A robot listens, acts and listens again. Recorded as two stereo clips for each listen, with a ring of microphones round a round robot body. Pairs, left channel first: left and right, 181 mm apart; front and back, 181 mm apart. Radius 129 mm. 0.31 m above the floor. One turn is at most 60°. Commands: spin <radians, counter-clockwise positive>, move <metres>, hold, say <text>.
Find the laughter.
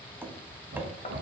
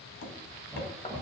spin -1.05
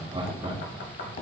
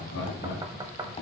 spin -0.52
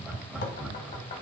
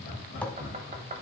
say Found it: laughter, straight ahead, 2 to 4 m away.